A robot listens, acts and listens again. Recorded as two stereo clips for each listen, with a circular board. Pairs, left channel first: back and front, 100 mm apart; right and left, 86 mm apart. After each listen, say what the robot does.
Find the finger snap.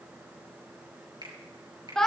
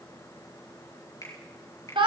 Turn 40° right.
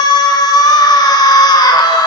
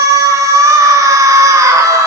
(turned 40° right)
Keep listening.
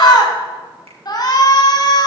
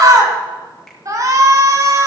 Keep listening.
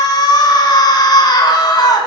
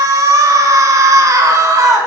Facing where the finger snap came from. I can't hear it now.